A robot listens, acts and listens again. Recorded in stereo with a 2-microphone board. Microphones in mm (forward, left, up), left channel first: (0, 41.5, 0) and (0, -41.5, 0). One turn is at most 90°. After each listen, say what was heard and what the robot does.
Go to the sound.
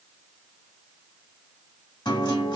The guitar: about 65° left or 115° left. Turn 65° left.
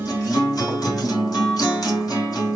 So it is at 50° left. Turn 50° left.
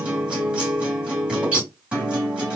The guitar is now 15° right. Turn 15° right.
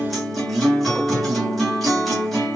Drive 1.0 m forward.
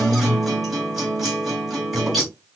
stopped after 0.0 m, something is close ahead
Blocked. The guitar is further on, straight ahead.